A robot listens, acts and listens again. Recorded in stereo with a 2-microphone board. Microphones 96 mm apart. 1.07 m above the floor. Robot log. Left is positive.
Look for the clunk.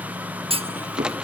cmd yaw -90
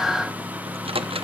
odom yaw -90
end: I heard a clunk from this way, but can't make it out now.